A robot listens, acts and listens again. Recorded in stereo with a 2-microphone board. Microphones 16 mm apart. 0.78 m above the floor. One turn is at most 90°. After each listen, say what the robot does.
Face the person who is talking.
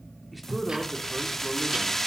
Turn 30° left.
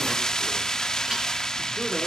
Keep listening.
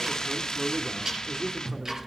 Turn 30° right.
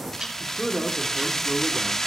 Turn 10° right.
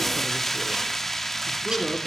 Facing the man speaking.